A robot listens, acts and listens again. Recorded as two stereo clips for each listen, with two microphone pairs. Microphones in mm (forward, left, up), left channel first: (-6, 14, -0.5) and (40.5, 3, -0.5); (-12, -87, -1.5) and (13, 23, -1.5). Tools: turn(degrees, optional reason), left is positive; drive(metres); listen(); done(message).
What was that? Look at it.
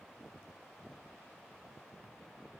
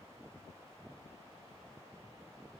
listen()
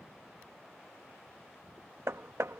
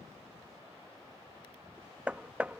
done("Facing the hammering.")